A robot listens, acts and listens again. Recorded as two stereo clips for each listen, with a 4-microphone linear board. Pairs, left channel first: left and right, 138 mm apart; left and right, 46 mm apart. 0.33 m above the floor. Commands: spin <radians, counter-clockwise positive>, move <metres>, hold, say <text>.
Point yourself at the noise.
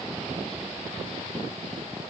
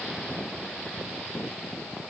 hold
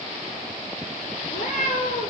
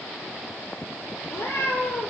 spin 1.57
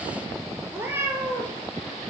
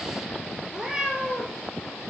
spin -0.26
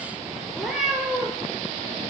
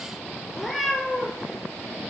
say Facing the cat meowing.